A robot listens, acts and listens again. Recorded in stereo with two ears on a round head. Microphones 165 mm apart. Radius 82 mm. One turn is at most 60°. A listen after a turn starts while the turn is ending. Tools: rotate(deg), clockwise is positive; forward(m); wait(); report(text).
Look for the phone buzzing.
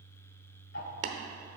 wait()
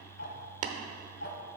wait()
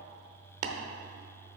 report("I can't make out a phone buzzing to turn to.")